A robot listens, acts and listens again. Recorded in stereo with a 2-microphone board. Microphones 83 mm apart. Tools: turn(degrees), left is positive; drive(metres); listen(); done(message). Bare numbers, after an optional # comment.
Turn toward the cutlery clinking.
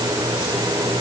listen()
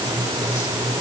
listen()
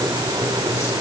done("I can't make out cutlery clinking.")